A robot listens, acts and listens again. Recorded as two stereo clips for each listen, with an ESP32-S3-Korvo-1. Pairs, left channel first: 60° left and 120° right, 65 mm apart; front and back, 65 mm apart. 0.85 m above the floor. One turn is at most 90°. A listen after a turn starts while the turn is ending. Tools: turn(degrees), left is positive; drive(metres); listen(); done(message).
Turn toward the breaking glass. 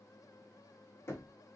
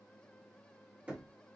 listen()
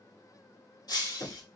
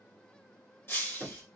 turn(degrees=55)
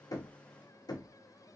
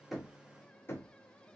done("Facing where the breaking glass came from. I can't hear it now.")